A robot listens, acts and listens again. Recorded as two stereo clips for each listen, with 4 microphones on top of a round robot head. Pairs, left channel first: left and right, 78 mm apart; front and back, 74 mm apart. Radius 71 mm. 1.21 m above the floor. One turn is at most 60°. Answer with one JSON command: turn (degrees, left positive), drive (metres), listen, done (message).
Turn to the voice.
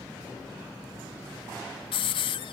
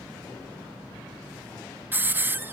{"listen": true}
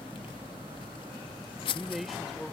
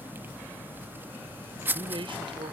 {"turn": 60}
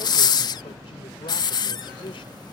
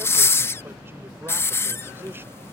{"turn": 60}
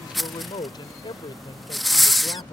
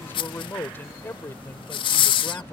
{"turn": 60}
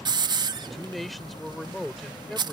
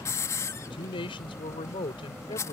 {"done": "Found it: a man speaking, straight ahead."}